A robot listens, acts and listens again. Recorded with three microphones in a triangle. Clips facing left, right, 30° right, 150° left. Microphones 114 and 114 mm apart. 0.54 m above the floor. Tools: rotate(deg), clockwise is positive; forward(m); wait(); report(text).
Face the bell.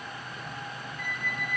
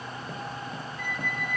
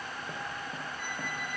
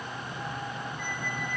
wait()
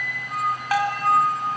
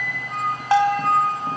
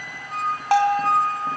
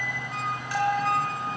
rotate(25)
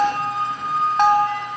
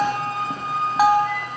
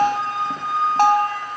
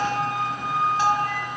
report("Facing the bell, 2 to 4 m away.")